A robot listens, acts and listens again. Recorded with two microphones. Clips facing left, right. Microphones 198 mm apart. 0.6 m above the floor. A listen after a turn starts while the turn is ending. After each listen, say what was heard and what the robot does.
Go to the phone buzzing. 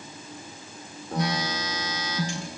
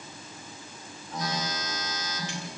The phone buzzing: about 70° left or 110° left. Turn 70° left.
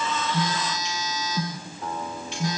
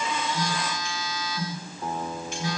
So it is at 45° left. Turn 45° left.
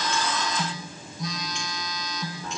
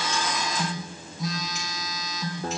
Drive 1.0 m forward.
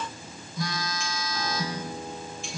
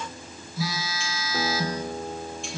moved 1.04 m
Drive 1.0 m forward.
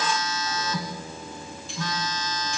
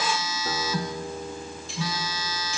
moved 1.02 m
The phone buzzing is now 10° right. Turn 10° right.
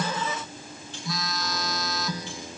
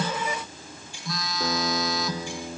Drive 1.0 m forward.
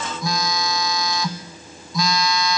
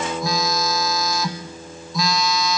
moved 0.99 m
Drive 1.0 m forward.
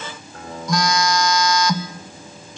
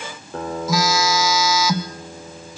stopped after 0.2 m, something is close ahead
Arrived at the phone buzzing, straight ahead.